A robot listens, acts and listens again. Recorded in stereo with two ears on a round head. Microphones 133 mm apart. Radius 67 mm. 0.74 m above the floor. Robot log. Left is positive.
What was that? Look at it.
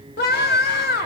note: The scream: about 75° left or 105° left.
cmd yaw +75
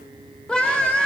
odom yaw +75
end: Found it: a scream, straight ahead, 2 to 4 m away.